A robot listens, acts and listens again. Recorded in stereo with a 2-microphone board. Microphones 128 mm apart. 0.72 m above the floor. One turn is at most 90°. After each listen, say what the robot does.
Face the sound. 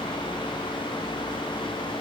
Keep listening.
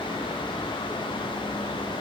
Keep listening.
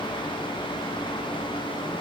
I can't make out anything.